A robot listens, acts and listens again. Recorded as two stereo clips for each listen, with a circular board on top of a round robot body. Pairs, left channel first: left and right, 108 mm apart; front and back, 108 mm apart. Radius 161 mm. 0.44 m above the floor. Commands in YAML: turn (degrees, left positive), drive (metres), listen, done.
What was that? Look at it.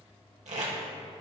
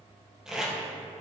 turn: -95
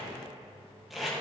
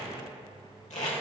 done: "Found it: tape being pulled, straight ahead."